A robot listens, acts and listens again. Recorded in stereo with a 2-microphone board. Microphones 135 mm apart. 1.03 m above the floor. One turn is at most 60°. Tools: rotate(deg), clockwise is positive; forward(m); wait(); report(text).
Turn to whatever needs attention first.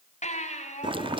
rotate(-60)
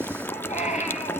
rotate(-60)
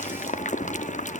wait()
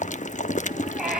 report("Facing the baby crying, over 4 m away.")